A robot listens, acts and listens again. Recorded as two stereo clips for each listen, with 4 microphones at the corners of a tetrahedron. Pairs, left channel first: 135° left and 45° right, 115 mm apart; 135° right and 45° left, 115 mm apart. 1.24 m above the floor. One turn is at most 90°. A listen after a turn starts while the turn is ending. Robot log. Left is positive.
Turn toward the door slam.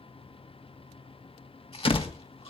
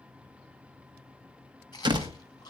note: The door slam: 95° left.
cmd yaw +90
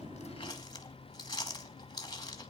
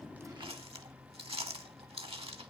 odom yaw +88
end: Facing where the door slam came from. I can't hear it now.